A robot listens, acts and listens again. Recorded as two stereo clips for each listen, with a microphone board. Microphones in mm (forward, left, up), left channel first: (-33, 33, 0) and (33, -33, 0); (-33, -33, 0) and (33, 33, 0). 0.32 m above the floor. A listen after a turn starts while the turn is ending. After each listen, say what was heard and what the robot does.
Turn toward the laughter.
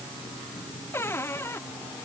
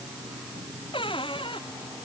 Keep listening.
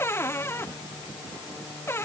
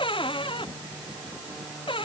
Keep listening.
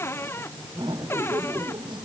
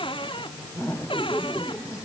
The laughter: 75° right. Turn 75° right.
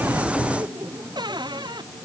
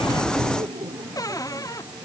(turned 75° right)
Found it: laughter, straight ahead.